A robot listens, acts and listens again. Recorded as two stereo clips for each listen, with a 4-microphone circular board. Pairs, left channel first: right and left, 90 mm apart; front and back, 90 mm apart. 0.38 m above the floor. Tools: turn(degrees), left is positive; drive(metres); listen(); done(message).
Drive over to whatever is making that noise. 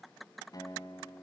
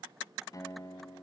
turn(degrees=-50)
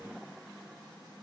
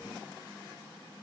listen()
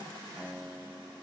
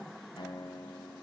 turn(degrees=10)
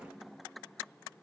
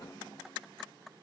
listen()
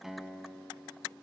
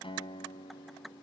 drive(metres=1.0)
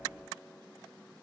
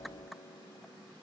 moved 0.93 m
listen()
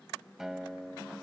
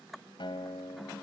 drive(metres=1.0)
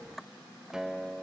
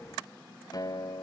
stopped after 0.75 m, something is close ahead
turn(degrees=10)
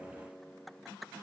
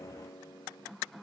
done("Arrived at the guitar, straight ahead.")